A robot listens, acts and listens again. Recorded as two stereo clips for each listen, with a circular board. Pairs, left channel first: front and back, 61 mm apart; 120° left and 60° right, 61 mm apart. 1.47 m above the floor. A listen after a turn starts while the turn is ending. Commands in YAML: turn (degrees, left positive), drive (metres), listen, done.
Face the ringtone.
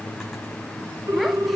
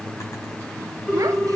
turn: -170
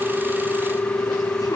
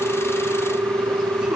turn: -60
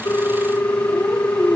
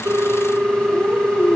done: "Facing the ringtone, 1 to 2 m away."